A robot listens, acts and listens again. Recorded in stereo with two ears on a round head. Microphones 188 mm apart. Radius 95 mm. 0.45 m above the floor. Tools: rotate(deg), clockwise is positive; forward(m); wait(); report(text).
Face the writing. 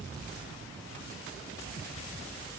wait()
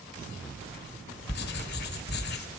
rotate(-55)
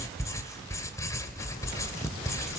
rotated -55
rotate(-20)
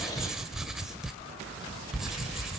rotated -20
report("Found it: writing, straight ahead.")